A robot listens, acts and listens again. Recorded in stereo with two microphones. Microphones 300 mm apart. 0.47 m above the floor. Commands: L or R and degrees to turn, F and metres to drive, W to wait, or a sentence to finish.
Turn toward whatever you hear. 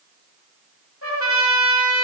L45
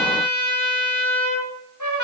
L85
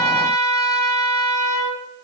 L10
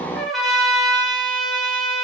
Found it: a trumpet, straight ahead.